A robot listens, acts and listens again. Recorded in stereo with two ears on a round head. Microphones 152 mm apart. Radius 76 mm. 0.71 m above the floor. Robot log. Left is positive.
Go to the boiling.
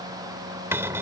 cmd idle
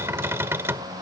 cmd idle
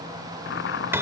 note: The boiling: about 70° left or 110° left.
cmd yaw +70
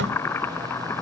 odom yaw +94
note: So it is at 15° left.
cmd yaw +15
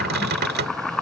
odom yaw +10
cmd fwd 1.0
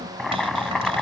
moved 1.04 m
cmd fwd 1.0
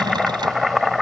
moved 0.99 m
cmd fwd 1.0
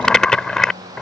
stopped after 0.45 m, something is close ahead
end: Arrived at the boiling, straight ahead.